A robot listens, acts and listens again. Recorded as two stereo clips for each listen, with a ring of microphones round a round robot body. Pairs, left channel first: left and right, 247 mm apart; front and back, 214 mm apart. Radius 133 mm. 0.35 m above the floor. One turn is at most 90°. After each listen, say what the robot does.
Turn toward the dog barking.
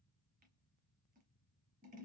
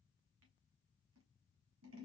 Keep listening.
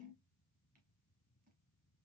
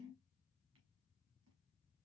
Keep listening.
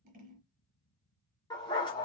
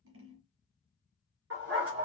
Turn 90° left.
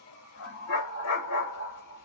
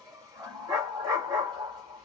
Turn 90° left.
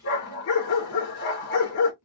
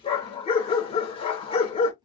Turn 65° left.
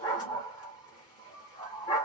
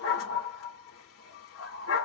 Turn 15° left.
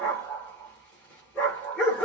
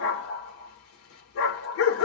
Facing the dog barking, 2 to 4 m away.